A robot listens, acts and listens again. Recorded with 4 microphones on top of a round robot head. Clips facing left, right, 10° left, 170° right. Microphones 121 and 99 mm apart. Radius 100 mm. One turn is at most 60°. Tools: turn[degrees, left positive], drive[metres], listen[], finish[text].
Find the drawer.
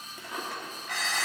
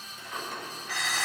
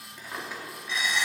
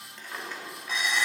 Thought: The drawer: 85° left.
Action: turn[60]
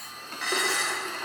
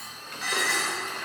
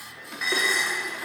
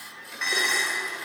Thought: Nothing new. It was at 25° left.
Action: turn[25]
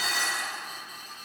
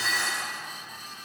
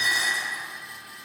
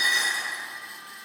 Action: listen[]
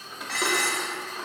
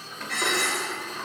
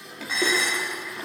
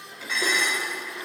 Thought: The drawer is now 10° left.
Action: turn[10]
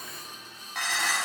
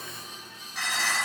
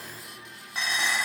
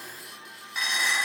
Action: listen[]
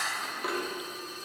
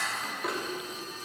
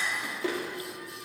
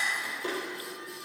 Action: finish[Facing the drawer.]